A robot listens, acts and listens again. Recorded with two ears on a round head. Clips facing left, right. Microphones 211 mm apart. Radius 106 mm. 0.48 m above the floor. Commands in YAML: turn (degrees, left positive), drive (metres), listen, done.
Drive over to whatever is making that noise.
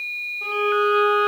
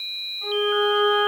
turn: 65
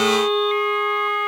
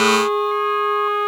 turn: 40
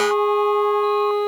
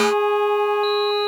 turn: -15
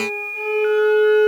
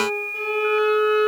drive: 1.0
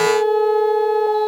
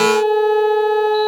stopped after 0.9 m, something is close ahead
done: "Arrived at the violin, straight ahead."